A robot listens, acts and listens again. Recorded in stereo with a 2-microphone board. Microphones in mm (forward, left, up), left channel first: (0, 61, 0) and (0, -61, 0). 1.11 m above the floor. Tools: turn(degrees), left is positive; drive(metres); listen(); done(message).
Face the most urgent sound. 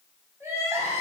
turn(degrees=-20)
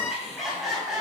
done("Facing the crying, over 4 m away.")